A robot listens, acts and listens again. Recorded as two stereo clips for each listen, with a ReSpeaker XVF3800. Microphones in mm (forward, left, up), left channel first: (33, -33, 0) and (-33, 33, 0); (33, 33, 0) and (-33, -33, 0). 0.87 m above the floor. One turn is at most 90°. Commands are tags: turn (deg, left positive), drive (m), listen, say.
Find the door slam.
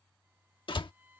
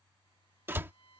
<turn deg="-70"/>
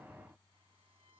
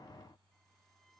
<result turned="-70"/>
<say>I heard a door slam from this way, but can't make it out now.</say>